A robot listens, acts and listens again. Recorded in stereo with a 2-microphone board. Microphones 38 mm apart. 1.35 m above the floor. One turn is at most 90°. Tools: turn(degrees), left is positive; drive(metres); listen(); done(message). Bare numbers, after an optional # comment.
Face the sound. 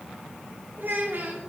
# The child speaking: about 65° right or 115° right.
turn(-65)
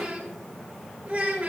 # So it is at 50° right.
turn(-50)
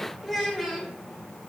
done("Found it: a child speaking, straight ahead.")